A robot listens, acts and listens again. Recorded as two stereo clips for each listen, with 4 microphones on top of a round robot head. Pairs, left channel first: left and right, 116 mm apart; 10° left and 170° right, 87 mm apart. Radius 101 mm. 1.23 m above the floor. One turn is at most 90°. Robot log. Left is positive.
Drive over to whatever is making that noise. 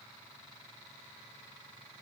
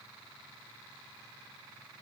cmd idle
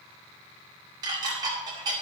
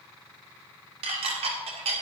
note: The dishes clattering: 155° right.
cmd yaw -90
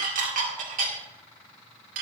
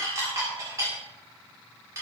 note: The dishes clattering is now 105° right.
cmd yaw -90
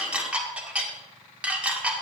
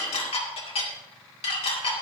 note: The dishes clattering is now 10° right.
cmd yaw -10
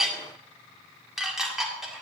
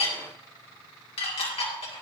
cmd fwd 1.0
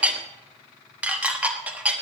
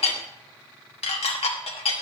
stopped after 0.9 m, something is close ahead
note: The dishes clattering is now 10° right.
cmd yaw -10
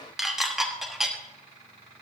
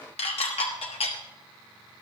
end: Arrived at the dishes clattering, straight ahead.